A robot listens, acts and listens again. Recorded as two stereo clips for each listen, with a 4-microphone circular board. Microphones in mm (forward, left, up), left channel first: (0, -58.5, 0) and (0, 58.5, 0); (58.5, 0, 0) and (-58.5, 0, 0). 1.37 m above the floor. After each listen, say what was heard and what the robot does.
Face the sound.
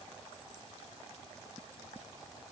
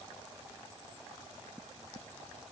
Keep listening.
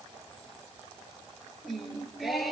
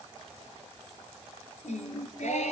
Found it: singing, straight ahead, over 4 m away.